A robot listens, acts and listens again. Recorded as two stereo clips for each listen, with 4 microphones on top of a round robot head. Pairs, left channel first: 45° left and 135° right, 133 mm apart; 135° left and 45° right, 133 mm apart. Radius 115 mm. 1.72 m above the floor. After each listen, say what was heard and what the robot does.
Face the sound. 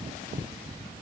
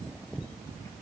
Keep listening.
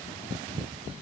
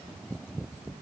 Keep listening.
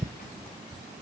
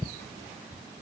I can't make out anything to turn to.